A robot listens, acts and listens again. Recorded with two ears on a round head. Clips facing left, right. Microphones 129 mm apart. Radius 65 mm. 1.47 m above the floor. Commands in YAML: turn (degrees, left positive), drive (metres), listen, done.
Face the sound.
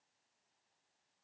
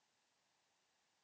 listen: true
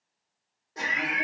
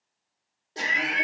turn: -35
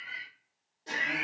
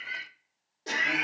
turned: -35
turn: -110
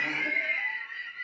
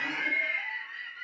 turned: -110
turn: 10
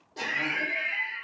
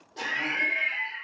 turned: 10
done: "Facing the laughter, under 1 m away."